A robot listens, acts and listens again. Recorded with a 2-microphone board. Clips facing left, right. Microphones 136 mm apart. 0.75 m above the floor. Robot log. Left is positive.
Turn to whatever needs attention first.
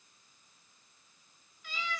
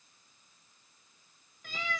cmd idle
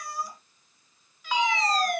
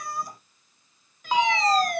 note: The fire alarm: about 30° right or 150° right.
cmd yaw -30
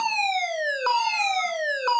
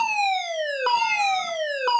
note: So it is at 10° right.
cmd yaw -10
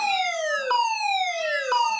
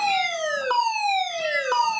end: Facing the fire alarm.